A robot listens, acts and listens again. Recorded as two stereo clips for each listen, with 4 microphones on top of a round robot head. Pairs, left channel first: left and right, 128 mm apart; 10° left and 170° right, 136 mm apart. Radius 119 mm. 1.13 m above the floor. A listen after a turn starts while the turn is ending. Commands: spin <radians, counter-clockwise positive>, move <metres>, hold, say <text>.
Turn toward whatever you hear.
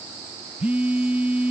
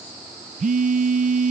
spin -2.97
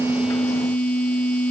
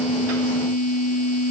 spin 0.17
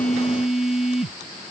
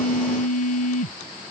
say Found it: a phone buzzing, straight ahead.